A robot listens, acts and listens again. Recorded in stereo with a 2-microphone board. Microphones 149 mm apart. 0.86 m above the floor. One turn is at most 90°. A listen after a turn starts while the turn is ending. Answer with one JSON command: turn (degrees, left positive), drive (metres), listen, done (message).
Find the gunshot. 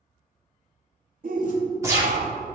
{"turn": -20}
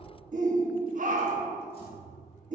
{"listen": true}
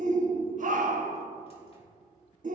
{"done": "I heard a gunshot, but can't make it out now. It was about straight ahead or 140° right."}